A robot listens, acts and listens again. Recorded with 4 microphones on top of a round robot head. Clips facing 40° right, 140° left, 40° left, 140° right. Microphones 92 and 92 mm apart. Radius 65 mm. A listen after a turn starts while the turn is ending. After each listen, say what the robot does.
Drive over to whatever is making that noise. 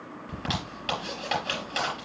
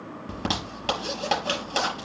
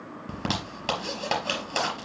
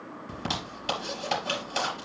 Turn 85° left.
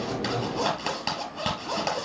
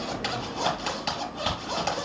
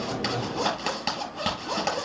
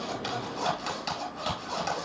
Drive 1.0 m forward.
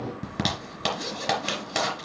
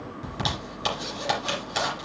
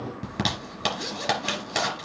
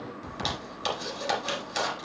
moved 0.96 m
Drive 1.0 m forward.
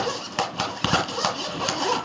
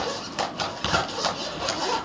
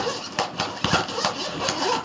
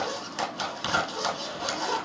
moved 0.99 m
Drive 1.0 m forward.
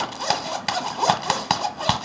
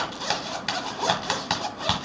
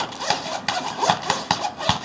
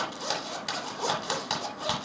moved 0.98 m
Turn 10° left.
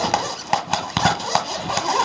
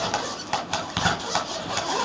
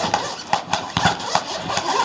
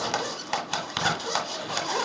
Drive 1.0 m forward.
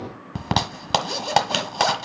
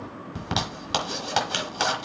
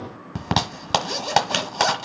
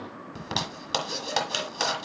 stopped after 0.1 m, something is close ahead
Arrived at the zipper, straight ahead.